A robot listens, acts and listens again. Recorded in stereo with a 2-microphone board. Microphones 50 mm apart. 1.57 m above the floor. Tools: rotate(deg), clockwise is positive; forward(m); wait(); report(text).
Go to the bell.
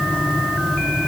wait()
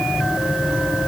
wait()
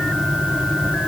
report("I can't make out a bell.")